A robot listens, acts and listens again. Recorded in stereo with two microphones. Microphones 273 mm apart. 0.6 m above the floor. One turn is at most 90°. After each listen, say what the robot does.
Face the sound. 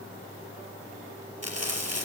Turn 75° right.
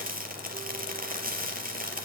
Turn 35° right.
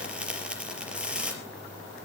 Facing the frying, over 4 m away.